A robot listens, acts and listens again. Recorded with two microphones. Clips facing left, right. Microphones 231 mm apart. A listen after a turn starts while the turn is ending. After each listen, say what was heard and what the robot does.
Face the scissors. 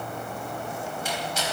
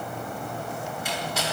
Keep listening.
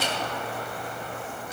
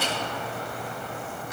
Keep listening.
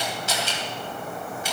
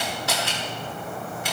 I can't make out scissors, only a camera shutter.